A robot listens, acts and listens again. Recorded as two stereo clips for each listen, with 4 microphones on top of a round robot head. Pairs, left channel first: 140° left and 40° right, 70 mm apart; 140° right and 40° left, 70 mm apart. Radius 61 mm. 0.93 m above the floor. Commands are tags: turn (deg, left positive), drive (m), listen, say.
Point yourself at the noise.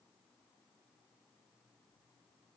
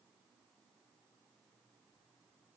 <listen/>
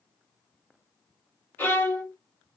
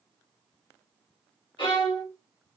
<turn deg="-155"/>
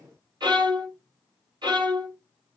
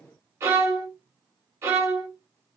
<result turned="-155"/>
<turn deg="-15"/>
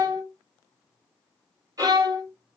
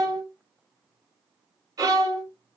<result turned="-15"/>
<say>Found it: a violin, straight ahead, 1 to 2 m away.</say>